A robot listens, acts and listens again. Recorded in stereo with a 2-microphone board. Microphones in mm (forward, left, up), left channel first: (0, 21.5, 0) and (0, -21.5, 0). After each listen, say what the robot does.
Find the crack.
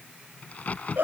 Turn 35° left.
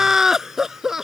Keep listening.
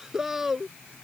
I heard a crack, but can't make it out now. It was about straight ahead or 110° left.